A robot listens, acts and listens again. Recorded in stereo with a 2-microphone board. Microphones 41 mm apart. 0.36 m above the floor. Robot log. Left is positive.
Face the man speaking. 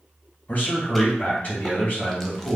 note: The man speaking: about 30° left or 150° left.
cmd yaw +30
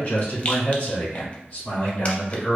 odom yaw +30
note: The man speaking: about 40° left or 140° left.
cmd yaw +40
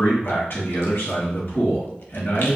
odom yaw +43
note: So it is at 110° left.
cmd yaw +110
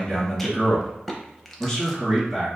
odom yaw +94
end: Found it: a man speaking, straight ahead, 2 to 4 m away.